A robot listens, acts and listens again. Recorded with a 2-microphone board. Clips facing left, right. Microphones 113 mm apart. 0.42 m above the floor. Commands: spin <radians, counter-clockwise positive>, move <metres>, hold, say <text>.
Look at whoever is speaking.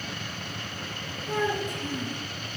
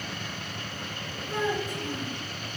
spin 1.22
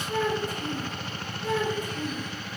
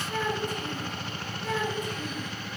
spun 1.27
spin 0.61
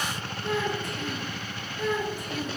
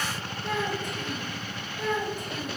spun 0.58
say Found it: a child speaking, straight ahead.